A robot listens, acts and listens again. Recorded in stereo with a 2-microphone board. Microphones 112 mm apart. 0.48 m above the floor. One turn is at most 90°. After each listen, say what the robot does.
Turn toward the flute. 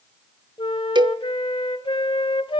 Turn 50° left.
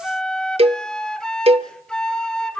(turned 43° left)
Found it: a flute, straight ahead.